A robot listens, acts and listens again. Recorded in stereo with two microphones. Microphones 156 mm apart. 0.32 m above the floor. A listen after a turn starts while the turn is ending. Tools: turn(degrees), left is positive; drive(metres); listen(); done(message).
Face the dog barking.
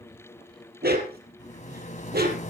turn(degrees=-90)
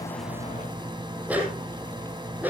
turn(degrees=-10)
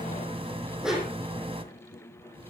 done("Found it: a dog barking, straight ahead, over 4 m away.")